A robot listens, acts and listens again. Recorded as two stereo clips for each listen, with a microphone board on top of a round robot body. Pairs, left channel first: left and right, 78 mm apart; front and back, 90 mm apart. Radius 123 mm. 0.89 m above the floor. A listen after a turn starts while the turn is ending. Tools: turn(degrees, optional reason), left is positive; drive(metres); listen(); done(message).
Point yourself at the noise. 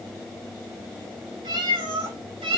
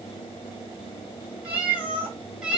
turn(degrees=-100, reason="The cat meowing: 100° right.")
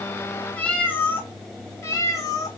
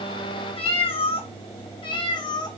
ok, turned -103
turn(degrees=45, reason="The cat meowing is now 45° left.")
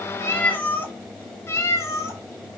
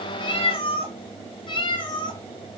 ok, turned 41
turn(degrees=35, reason="The cat meowing is now 35° left.")
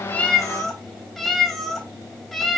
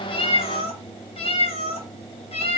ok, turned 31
done("Facing the cat meowing, 1 to 2 m away.")